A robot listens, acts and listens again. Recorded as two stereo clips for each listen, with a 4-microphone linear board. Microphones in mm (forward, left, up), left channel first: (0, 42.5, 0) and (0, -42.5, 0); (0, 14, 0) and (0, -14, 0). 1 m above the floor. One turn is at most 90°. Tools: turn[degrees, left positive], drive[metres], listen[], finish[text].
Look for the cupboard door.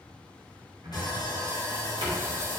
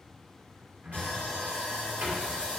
Action: turn[-90]
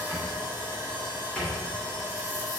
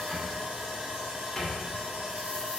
Thought: So it is at 15° left.
Action: turn[15]
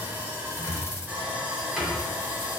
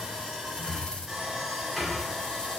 Action: finish[Found it: a cupboard door, straight ahead.]